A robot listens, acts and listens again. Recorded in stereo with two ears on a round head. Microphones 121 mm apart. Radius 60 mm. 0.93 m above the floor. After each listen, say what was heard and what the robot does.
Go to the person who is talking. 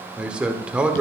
Turn 30° right.
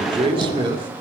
So it is at 145° right. Turn 145° right.
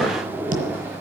Keep listening.
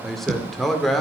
Drive 1.0 m forward.
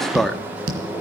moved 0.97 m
Drive 1.0 m forward.
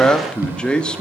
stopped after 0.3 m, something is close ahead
I am next to the man speaking.